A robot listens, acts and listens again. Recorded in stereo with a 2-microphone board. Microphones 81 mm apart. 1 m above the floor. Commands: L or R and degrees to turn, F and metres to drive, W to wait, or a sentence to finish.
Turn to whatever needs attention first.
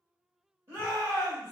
R30
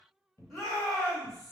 Facing the shout, 1 to 2 m away.